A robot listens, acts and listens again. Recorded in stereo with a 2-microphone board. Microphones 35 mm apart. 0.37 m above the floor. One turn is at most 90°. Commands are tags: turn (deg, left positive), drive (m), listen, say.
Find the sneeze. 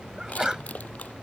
<turn deg="-20"/>
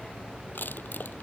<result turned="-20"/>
<listen/>
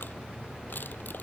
<say>I heard a sneeze, but can't make it out now. It was about straight ahead or 140° right.</say>